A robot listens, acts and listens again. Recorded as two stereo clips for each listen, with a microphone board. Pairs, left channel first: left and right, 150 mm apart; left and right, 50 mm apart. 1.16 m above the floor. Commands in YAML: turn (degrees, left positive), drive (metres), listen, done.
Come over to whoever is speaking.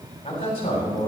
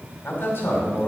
turn: 40
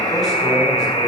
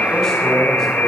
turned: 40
listen: true
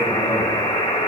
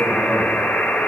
listen: true
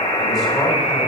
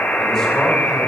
done: "I heard a man speaking, but can't make it out now. It was about straight ahead or 100° left. I did not reach it."